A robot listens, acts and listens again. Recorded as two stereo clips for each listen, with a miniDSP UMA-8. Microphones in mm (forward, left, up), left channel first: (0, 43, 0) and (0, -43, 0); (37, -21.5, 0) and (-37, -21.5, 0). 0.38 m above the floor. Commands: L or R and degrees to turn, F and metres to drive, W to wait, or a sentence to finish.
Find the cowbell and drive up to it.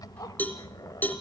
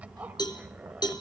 L20
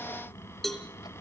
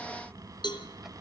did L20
F1.0
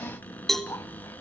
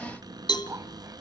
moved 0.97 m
F1.0
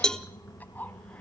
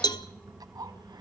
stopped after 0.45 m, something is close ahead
L10
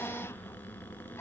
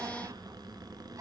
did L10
W
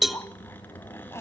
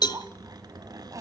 Arrived at the cowbell, straight ahead.